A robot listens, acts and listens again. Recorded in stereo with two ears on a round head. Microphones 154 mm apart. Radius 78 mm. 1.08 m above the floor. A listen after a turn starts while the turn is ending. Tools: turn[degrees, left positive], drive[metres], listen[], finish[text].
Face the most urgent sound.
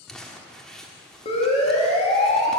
Thought: The siren: about 35° left or 145° left.
Action: turn[35]
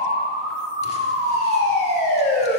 Thought: So it is at 105° left.
Action: turn[105]
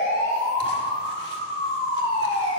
Thought: The siren is now 30° left.
Action: turn[30]
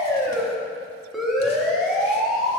Action: finish[Found it: a siren, straight ahead.]